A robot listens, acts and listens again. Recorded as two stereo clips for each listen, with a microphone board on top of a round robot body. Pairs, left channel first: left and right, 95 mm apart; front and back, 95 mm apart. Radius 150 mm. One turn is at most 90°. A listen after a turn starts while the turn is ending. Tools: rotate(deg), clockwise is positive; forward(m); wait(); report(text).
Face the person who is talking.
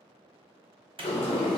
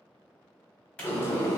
wait()
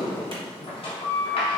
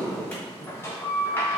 wait()
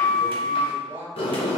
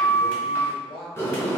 rotate(25)
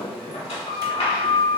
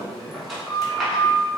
wait()
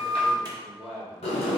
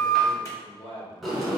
report("Found it: a man speaking, straight ahead.")